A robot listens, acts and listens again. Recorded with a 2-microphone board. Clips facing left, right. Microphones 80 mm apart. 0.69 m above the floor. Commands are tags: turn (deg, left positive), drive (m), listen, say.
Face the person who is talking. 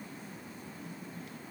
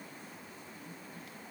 <listen/>
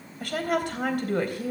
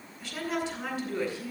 <turn deg="55"/>
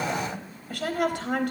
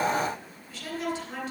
<turn deg="65"/>
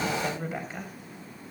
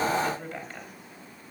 <turn deg="10"/>
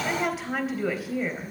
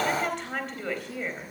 <say>Facing the woman speaking.</say>